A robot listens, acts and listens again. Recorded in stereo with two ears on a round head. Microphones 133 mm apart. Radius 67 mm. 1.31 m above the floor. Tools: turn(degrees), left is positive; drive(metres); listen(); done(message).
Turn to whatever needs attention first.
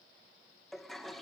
listen()
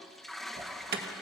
turn(degrees=-75)
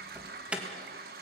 turn(degrees=-10)
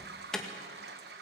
done("Found it: an alarm, straight ahead.")